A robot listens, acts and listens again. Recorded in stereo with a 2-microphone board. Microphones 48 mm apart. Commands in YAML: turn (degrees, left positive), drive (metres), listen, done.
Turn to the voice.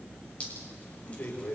turn: 50
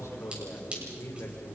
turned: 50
turn: 80
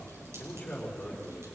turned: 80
turn: 20
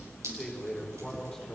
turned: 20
done: "Facing the man speaking, over 4 m away."